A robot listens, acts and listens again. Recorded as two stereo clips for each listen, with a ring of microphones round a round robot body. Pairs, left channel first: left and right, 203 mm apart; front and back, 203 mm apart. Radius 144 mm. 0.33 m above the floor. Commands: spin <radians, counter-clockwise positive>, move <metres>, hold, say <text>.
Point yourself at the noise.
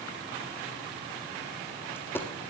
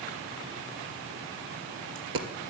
spin 3.05
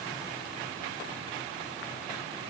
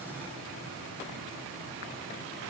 say Facing where the dropped coin came from. I can't hear it now.